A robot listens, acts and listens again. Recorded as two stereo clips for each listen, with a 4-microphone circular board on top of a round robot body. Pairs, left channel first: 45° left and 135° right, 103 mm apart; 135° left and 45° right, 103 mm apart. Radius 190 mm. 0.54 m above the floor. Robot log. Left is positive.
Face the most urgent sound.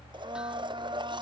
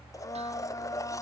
cmd idle
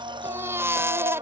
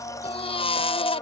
note: The baby crying: 160° left.
cmd yaw +160
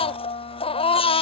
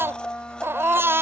note: The baby crying is now 20° left.
cmd yaw +20
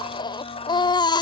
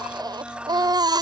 end: Found it: a baby crying, straight ahead.